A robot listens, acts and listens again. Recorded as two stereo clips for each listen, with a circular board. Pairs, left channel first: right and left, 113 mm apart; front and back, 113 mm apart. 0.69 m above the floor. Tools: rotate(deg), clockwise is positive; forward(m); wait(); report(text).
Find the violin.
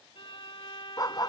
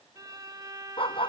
rotate(125)
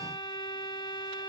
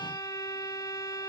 rotate(50)
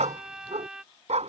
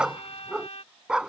report("Found it: a violin, straight ahead.")